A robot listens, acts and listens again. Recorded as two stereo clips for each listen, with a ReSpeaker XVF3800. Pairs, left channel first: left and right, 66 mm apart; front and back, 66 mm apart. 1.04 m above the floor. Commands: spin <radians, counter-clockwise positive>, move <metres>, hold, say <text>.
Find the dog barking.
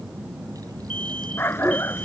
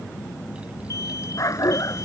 spin 0.61
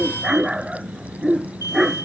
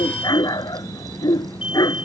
say Found it: a dog barking, straight ahead.